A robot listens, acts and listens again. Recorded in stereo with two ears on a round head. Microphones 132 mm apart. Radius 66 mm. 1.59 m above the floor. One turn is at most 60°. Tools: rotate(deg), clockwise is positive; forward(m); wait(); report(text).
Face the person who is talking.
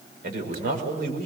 rotate(60)
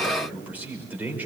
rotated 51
rotate(10)
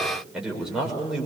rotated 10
report("Found it: a man speaking, straight ahead.")